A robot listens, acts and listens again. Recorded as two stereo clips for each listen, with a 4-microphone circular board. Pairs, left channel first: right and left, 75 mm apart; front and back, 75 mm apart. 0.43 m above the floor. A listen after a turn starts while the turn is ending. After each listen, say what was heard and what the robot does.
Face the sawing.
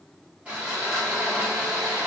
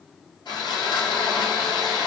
The sawing: 15° left. Turn 15° left.
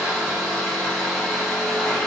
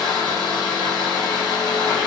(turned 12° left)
Facing the sawing.